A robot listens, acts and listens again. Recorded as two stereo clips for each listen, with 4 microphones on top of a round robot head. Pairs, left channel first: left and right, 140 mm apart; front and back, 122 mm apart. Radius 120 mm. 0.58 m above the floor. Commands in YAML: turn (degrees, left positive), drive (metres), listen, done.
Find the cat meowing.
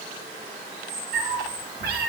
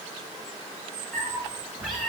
turn: -100
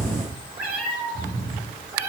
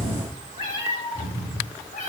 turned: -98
turn: -15
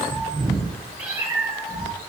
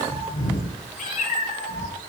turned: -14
turn: -10
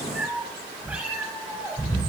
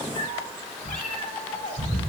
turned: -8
done: "Facing the cat meowing."